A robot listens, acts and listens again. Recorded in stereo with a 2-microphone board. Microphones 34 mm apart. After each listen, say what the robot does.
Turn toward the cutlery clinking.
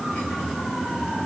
Keep listening.
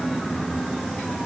Keep listening.
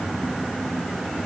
I can't make out cutlery clinking to turn to.